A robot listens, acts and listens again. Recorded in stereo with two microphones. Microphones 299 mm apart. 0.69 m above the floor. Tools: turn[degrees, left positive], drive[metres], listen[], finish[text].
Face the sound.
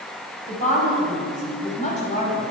Thought: The woman speaking: about 20° left or 160° left.
Action: turn[20]
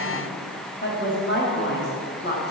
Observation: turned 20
Thought: The woman speaking: about 35° left or 145° left.
Action: turn[35]
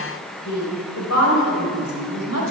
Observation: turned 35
Thought: So it is at 120° left.
Action: turn[120]
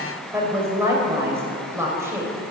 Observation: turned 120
Thought: The woman speaking is now 10° right.
Action: turn[-10]
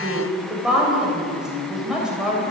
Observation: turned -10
Action: finish[Facing the woman speaking.]